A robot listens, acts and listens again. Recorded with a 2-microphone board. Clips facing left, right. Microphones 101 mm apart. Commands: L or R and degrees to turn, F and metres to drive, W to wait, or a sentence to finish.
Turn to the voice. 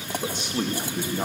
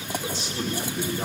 L50
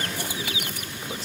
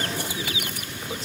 W
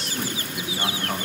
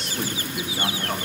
Found it: a man speaking, straight ahead.